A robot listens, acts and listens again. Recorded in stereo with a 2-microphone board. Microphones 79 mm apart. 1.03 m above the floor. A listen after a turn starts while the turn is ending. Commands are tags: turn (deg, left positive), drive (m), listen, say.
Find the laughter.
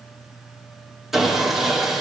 <listen/>
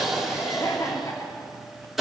<turn deg="40"/>
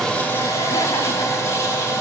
<listen/>
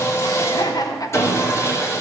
<turn deg="45"/>
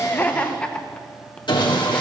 <turn deg="15"/>
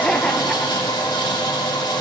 <listen/>
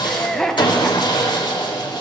<say>Facing the laughter, 1 to 2 m away.</say>